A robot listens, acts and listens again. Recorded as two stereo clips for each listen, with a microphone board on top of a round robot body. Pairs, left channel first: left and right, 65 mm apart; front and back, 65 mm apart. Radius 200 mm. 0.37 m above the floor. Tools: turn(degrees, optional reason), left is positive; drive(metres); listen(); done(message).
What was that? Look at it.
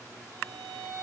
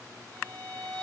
turn(degrees=-65, reason="The violin: 65° right.")
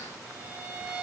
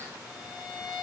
turn(degrees=-20, reason="The violin is now 20° right.")
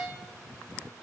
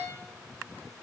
done("Facing the violin.")